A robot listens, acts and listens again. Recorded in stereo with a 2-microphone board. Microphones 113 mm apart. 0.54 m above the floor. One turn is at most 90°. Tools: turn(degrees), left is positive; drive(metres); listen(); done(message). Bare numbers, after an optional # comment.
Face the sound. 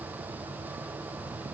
listen()
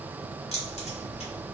# The keys jangling: about 65° left or 115° left.
turn(65)
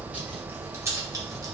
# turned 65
# So it is at 30° right.
turn(-30)
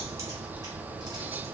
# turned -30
listen()
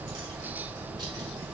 # The keys jangling is now 35° right.
turn(-35)
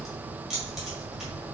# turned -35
done("Facing the keys jangling.")